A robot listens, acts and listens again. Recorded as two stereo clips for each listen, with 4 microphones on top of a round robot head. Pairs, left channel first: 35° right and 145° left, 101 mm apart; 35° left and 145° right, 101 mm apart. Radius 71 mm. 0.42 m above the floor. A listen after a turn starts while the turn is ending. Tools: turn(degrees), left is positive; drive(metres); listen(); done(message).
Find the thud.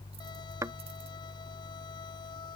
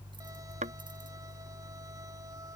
turn(degrees=-155)
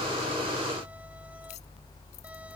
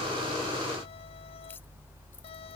done("I heard a thud from this way, but can't make it out now.")